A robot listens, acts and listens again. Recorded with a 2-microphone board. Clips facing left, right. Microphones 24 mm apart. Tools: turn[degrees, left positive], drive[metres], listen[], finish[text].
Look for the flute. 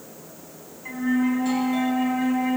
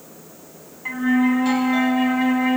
Thought: The flute: about 30° right or 150° right.
Action: turn[-30]
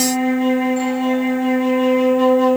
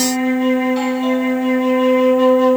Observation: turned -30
Action: finish[Facing the flute.]